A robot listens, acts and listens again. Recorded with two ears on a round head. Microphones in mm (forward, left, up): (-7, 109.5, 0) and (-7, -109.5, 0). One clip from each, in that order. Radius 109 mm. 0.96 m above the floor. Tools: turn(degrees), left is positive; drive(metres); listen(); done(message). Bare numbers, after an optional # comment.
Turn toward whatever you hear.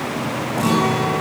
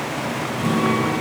# The guitar: about 45° left or 135° left.
turn(45)
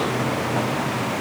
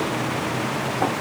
listen()
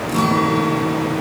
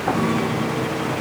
# So it is at 90° left.
turn(90)
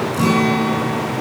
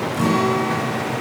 # The guitar is now 10° left.
turn(10)
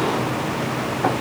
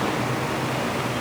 listen()
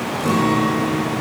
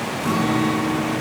done("Facing the guitar, over 4 m away.")